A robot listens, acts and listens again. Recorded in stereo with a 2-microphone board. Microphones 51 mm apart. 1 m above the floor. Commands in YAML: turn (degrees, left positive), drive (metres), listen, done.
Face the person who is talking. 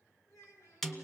turn: 90
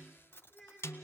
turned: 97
done: "Facing the child speaking."